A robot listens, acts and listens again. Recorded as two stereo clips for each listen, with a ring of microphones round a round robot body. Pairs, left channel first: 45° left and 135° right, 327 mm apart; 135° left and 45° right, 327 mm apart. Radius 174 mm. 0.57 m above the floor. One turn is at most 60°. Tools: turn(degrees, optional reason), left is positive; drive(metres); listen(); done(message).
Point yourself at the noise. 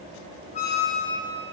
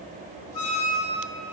turn(degrees=60, reason="The squeak: 115° left.")
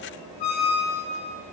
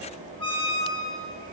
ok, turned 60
turn(degrees=60, reason="The squeak is now 60° left.")
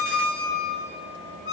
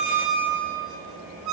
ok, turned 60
done("Facing the squeak, over 4 m away.")